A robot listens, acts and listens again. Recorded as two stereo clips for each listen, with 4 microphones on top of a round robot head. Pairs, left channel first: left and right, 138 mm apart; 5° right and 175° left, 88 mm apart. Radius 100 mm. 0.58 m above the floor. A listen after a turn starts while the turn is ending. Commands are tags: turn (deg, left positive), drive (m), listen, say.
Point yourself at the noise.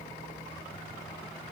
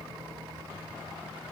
<listen/>
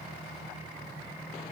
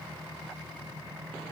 <listen/>
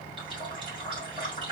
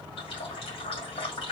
<turn deg="-30"/>
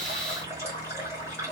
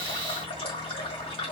<turn deg="-15"/>
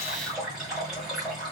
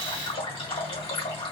<say>Facing the running tap, 2 to 4 m away.</say>